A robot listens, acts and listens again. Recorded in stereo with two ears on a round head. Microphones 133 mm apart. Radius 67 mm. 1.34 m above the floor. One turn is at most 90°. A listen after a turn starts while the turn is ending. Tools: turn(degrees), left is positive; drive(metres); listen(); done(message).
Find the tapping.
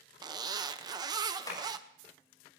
turn(degrees=25)
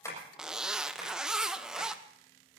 listen()
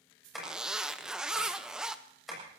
done("Facing the tapping.")